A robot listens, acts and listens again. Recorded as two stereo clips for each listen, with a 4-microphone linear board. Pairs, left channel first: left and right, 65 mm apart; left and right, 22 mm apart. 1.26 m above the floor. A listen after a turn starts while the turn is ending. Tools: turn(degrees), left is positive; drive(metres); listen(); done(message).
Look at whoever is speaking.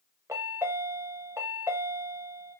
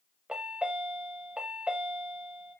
listen()
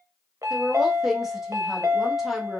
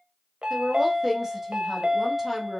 turn(degrees=-30)
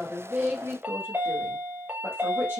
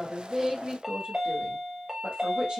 turn(degrees=-145)
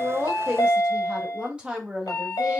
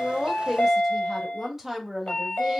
turn(degrees=-15)
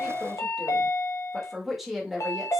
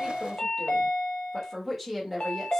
done("Facing the woman speaking, 1 to 2 m away.")